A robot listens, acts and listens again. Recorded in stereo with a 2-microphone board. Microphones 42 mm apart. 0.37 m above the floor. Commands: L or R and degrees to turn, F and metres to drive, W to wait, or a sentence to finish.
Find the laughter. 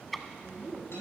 R50
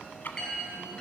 W
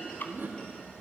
R70
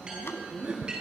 R25
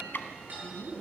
Found it: laughter, straight ahead, 2 to 4 m away.